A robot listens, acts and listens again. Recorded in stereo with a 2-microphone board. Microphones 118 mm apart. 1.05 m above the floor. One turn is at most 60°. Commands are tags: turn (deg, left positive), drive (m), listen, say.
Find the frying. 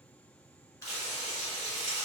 <turn deg="60"/>
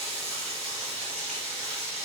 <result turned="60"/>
<turn deg="10"/>
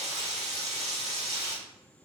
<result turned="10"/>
<say>Facing the frying.</say>